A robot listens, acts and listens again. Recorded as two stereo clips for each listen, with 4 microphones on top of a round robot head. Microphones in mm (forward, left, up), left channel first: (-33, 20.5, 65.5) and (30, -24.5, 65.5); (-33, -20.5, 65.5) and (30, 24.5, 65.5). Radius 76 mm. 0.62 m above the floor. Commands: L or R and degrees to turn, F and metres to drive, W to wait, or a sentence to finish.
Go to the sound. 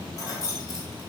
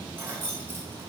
L95
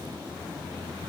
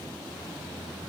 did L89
W
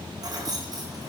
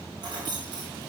F1.0
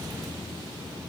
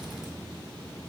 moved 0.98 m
W
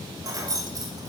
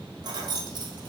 F1.0
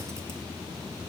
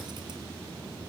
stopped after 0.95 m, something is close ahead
W
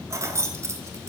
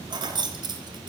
L15
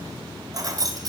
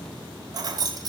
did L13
I am next to the keys jangling.